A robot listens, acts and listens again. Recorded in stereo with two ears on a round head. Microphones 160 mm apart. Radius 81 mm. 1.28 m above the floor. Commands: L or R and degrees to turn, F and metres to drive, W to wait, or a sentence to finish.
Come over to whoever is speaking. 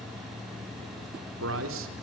R90
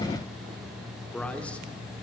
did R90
L10
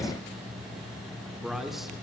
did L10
F1.0
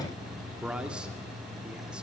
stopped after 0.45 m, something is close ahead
Something is in my way. I am facing the man speaking but have not reached it.